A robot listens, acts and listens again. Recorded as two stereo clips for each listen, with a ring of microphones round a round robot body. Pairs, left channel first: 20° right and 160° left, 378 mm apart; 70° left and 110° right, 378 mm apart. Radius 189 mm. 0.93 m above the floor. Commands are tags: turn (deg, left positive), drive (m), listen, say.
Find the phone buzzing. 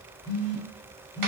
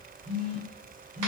<turn deg="-45"/>
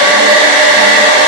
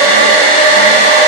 <listen/>
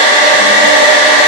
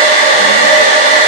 <listen/>
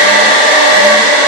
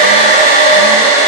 <say>I heard a phone buzzing from this way, but can't make it out now.</say>